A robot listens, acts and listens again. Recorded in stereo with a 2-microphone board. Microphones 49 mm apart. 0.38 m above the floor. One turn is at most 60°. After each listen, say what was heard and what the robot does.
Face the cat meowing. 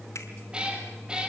The cat meowing: about 20° right or 160° right. Turn 20° right.
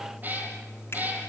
The cat meowing: about 35° right or 145° right. Turn 35° right.
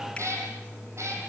So it is at 110° right. Turn 60° right.
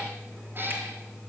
Nothing new. It was at 50° right. Turn 50° right.
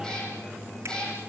The cat meowing is now 15° left. Turn 15° left.
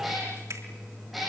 Facing the cat meowing, over 4 m away.